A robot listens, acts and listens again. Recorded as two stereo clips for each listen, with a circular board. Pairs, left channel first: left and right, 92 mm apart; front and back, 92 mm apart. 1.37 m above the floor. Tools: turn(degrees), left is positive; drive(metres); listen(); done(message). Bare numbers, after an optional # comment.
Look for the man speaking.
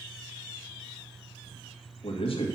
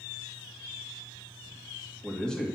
# The man speaking: 80° left.
turn(80)
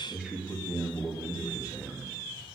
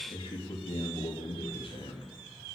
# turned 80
# The man speaking is now 20° right.
turn(-20)
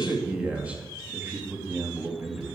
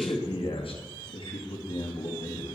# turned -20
# The man speaking is now 20° right.
turn(-20)
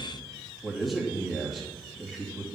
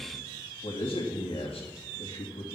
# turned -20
done("Found it: a man speaking, straight ahead, 2 to 4 m away.")